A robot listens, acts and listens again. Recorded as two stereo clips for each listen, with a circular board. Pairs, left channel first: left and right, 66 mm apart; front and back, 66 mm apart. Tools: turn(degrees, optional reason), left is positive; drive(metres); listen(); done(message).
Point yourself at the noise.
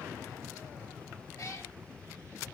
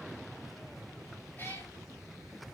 turn(degrees=60, reason="The cat meowing: 60° left.")
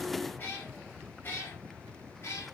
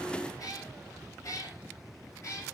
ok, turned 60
turn(degrees=40, reason="The cat meowing is now 40° left.")
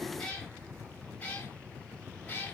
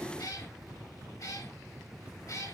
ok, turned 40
turn(degrees=25, reason="The cat meowing is now 25° left.")
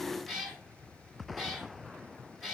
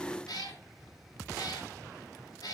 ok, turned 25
done("Facing the cat meowing, 2 to 4 m away.")